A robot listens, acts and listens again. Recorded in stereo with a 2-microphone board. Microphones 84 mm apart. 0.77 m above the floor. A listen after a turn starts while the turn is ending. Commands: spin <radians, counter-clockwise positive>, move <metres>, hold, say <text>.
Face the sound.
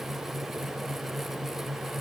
hold
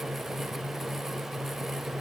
hold
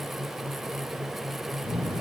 spin -0.87
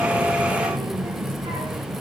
spin -1.31
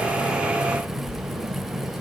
say Facing the child speaking, over 4 m away.